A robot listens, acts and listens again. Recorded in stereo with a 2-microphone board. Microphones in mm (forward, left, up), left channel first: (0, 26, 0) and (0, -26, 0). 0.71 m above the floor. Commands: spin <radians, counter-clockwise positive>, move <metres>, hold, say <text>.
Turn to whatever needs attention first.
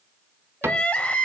spin 0.44
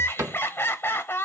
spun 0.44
spin 2.18
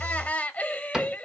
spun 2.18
spin 0.61
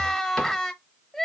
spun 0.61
say Found it: crying, straight ahead.